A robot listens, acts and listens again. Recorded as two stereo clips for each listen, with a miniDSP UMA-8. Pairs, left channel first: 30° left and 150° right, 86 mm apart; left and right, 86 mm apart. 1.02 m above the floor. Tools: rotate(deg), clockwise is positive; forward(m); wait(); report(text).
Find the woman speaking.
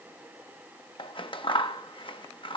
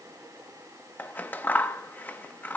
wait()
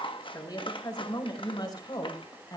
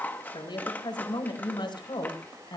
rotate(-65)
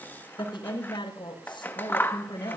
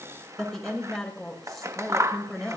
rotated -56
report("Found it: a woman speaking, straight ahead, over 4 m away.")